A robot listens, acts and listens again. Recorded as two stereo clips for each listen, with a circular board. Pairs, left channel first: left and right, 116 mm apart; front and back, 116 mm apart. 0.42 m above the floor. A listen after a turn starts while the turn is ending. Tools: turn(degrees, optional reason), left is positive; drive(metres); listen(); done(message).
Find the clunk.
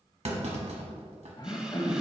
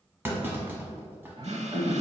turn(degrees=-110, reason="The clunk: 110° right.")
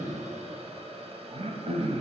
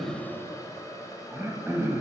done("Facing where the clunk came from. I can't hear it now.")